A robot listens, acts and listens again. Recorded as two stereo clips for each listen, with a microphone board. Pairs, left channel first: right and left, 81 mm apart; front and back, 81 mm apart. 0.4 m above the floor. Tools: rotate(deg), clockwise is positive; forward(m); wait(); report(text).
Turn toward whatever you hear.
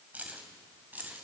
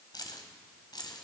rotate(-25)
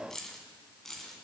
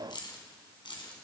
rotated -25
report("Found it: keys jangling, straight ahead, 2 to 4 m away.")